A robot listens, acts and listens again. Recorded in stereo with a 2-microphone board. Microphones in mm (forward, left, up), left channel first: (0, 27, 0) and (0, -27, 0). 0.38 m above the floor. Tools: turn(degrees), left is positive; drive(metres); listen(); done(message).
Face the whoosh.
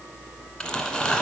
listen()
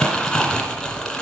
listen()
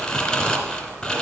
done("I can't make out a whoosh to turn to.")